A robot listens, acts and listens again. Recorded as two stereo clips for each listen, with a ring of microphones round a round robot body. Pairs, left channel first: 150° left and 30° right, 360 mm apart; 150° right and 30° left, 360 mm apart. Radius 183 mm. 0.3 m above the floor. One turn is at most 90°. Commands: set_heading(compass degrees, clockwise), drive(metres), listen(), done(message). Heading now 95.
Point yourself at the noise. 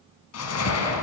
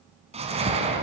set_heading(5)
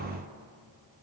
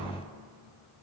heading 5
set_heading(350)
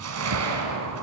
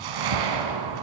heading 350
set_heading(335)
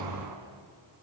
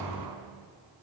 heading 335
listen()
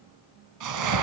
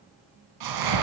done("Facing the whoosh, 2 to 4 m away.")